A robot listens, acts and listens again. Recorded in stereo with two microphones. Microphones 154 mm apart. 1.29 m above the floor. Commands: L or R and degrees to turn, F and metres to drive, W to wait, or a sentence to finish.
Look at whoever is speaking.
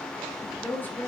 L30
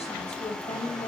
L135
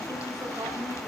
R15
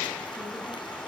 W
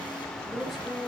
Found it: a woman speaking, straight ahead, over 4 m away.